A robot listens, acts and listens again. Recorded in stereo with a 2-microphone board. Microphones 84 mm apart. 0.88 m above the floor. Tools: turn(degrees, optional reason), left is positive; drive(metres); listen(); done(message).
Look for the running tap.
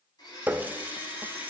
turn(degrees=-20, reason="The running tap: about 20° right or 160° right.")
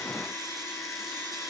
listen()
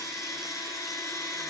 listen()
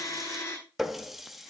done("Facing the running tap, under 1 m away.")